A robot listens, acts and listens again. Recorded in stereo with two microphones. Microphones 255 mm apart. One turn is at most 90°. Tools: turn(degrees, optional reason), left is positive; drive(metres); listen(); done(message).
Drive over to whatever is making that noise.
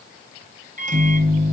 turn(degrees=-30, reason="The microwave: about 30° right or 150° right.")
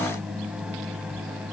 drive(metres=1.0)
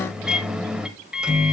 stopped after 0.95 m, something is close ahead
done("Arrived at the microwave, straight ahead.")